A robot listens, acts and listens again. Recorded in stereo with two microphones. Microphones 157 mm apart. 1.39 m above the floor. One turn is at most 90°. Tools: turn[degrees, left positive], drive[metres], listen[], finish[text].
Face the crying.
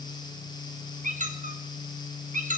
Action: listen[]
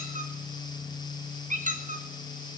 Action: listen[]
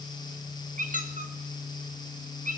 Action: finish[I can't make out crying, only a squeak.]